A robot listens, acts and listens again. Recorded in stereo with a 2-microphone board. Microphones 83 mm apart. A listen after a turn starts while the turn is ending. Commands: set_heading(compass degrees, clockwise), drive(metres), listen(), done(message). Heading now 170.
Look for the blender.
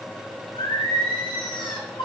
listen()
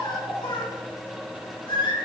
listen()
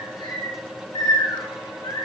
done("I can't make out a blender, only singing.")